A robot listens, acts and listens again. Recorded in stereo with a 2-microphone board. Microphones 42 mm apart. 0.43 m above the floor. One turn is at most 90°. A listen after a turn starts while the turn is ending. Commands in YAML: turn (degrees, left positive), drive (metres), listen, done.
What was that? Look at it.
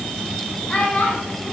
turn: 30
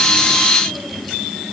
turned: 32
listen: true
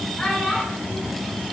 turn: 15
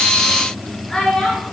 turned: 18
turn: 10
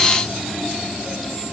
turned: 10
listen: true
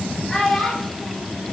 done: "Facing the child speaking, over 4 m away."